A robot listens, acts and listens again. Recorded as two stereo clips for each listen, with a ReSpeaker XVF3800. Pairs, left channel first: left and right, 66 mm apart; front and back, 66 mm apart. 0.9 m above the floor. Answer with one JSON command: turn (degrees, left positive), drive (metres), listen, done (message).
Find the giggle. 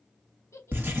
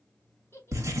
{"turn": 55}
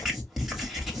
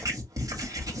{"listen": true}
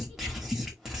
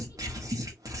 {"listen": true}
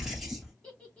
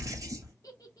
{"turn": 25}
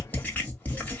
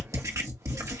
{"listen": true}
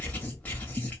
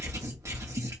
{"listen": true}
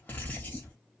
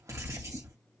{"done": "I heard a giggle from this way, but can't make it out now."}